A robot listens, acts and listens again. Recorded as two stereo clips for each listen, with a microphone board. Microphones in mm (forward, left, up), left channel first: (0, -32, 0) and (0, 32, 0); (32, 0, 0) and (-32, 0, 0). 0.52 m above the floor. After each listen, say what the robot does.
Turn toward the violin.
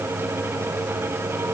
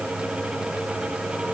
Keep listening.
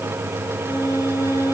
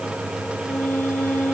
Turn 65° right.
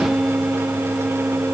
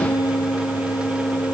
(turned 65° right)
Facing the violin.